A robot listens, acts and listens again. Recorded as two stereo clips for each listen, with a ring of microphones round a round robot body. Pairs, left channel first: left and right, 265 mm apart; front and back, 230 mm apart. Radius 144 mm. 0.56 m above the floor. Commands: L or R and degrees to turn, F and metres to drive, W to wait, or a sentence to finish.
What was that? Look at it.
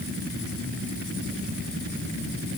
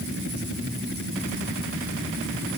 W
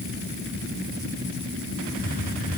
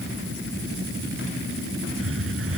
L150
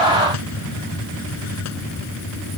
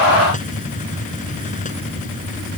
L60
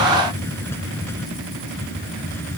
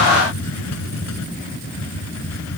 L10
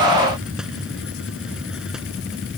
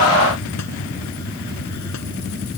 Facing the hiss.